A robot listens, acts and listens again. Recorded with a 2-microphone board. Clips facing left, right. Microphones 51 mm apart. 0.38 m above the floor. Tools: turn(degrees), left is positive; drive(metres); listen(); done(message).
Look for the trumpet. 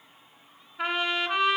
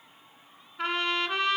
turn(degrees=30)
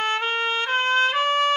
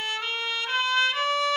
turn(degrees=140)
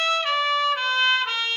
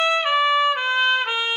turn(degrees=-20)
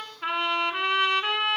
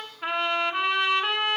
done("Facing the trumpet, under 1 m away.")